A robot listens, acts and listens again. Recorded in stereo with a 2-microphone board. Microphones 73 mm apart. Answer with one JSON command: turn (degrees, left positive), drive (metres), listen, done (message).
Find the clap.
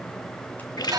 {"listen": true}
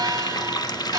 {"listen": true}
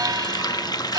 {"done": "I can't make out a clap to turn to."}